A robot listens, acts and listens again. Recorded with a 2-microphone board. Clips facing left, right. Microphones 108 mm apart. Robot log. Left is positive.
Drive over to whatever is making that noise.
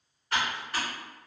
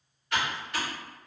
note: The typing on a keyboard: about 35° left or 145° left.
cmd yaw +35
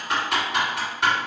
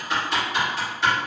note: So it is at 110° left.
cmd yaw +110
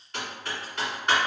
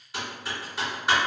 cmd fwd 1.0
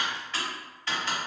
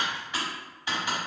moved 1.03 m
note: The typing on a keyboard is now 15° right.
cmd yaw -15
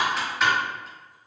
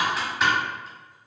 cmd fwd 1.0
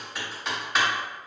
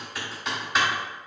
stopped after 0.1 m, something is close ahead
end: Arrived at the typing on a keyboard, straight ahead.